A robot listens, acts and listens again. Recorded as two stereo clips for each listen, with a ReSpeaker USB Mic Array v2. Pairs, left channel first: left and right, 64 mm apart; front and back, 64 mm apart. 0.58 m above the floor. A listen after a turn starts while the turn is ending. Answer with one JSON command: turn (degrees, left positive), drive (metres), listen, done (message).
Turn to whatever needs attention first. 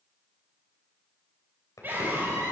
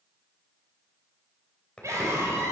{"turn": -145}
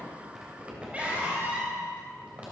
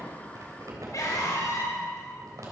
{"turn": -20}
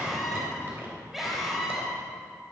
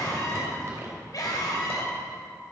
{"done": "Found it: a scream, straight ahead."}